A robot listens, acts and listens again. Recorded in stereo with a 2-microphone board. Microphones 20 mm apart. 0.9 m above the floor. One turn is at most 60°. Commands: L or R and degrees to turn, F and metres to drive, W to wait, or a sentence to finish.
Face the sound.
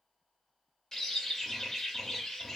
L25
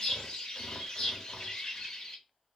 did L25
L60
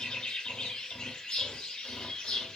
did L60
L60
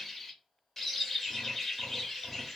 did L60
L10
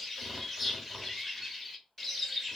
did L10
Facing the bird, under 1 m away.